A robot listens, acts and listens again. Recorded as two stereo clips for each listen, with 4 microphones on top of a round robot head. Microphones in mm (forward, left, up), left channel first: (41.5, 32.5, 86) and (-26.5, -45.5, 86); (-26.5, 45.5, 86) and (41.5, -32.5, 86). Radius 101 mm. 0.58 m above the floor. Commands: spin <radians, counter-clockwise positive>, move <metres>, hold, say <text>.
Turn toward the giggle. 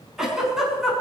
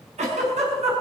spin -0.79
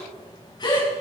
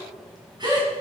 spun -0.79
say Found it: a giggle, straight ahead.